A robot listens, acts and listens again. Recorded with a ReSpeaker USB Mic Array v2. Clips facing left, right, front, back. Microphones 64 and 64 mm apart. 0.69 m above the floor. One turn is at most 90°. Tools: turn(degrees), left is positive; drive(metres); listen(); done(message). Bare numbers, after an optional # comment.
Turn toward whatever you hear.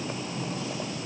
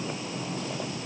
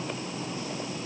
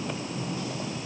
listen()
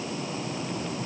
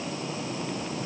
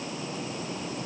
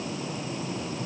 listen()
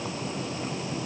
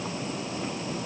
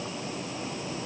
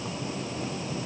done("I can't make out anything.")